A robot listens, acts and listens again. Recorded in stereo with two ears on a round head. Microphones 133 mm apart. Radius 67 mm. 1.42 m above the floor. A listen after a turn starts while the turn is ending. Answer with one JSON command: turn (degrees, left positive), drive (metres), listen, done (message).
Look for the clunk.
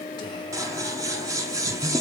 {"listen": true}
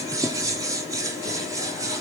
{"listen": true}
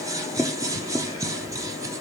{"done": "I can't make out a clunk to turn to."}